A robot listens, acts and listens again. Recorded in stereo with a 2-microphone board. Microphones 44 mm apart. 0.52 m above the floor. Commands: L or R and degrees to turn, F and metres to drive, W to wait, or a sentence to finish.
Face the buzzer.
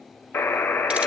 L65
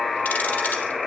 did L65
Facing the buzzer, under 1 m away.